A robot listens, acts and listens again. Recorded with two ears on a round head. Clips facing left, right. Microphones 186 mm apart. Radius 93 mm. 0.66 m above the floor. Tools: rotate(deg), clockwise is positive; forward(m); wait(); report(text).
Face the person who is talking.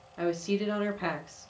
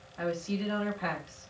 rotate(-45)
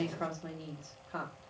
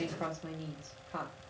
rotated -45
report("Facing the woman speaking, 1 to 2 m away.")